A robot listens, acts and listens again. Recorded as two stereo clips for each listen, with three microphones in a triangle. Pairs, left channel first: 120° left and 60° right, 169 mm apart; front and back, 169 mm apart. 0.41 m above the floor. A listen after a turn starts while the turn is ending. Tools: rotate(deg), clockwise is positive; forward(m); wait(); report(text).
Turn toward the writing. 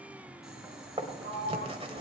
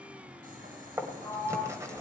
rotate(110)
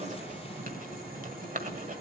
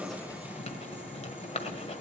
rotate(40)
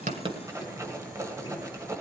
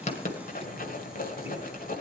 rotate(-10)
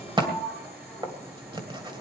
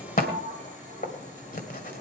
report("Facing the writing, 1 to 2 m away.")